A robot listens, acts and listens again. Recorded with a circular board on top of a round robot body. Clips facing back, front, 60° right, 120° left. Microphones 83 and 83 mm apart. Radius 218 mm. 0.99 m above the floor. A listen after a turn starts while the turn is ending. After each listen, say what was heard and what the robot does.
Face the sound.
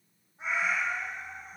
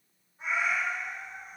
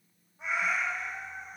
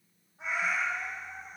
The cat meowing: 125° left. Turn 125° left.
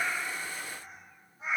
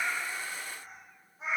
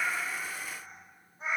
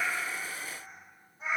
Found it: a cat meowing, straight ahead.